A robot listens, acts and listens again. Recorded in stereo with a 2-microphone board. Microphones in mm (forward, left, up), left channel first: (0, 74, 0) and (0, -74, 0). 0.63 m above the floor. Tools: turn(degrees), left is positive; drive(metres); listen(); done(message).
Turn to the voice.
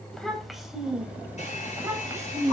turn(degrees=-25)
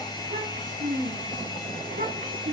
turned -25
turn(degrees=-110)
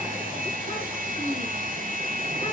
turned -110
turn(degrees=35)
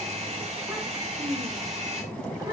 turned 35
turn(degrees=-25)
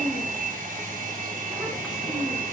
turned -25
done("Found it: a child speaking, straight ahead.")